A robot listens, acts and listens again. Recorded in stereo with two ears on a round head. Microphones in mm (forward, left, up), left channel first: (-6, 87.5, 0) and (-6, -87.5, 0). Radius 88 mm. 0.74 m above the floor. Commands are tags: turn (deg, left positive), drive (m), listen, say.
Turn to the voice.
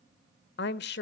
<turn deg="60"/>
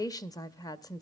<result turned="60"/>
<turn deg="20"/>
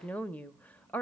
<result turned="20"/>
<turn deg="10"/>
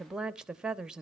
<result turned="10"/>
<say>Found it: a woman speaking, straight ahead, under 1 m away.</say>